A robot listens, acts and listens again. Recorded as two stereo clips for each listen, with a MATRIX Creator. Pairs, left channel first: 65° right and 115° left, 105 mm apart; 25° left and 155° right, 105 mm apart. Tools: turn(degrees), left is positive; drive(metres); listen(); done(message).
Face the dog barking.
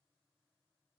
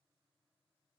listen()
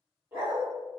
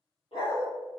turn(degrees=40)
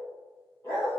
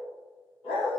done("Found it: a dog barking, straight ahead, 2 to 4 m away.")